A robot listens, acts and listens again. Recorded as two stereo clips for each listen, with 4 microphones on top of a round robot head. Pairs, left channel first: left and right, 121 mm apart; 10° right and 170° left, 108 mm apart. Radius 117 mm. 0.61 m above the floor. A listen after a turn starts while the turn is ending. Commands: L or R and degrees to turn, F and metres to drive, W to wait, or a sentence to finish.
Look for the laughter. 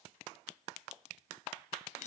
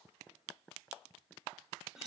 W
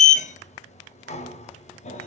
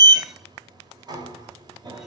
W
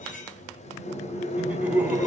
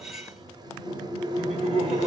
R170
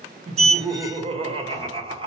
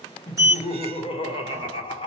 R45
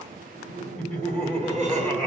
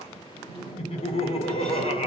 L10
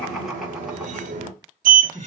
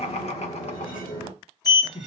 Facing the laughter.